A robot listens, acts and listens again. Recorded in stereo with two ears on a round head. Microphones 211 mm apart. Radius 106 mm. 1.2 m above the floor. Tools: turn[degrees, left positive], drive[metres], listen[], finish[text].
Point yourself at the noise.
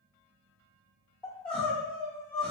Action: turn[30]
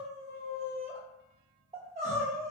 Thought: So it is at 30° right.
Action: turn[-30]
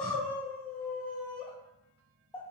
Action: finish[Facing the crying, 1 to 2 m away.]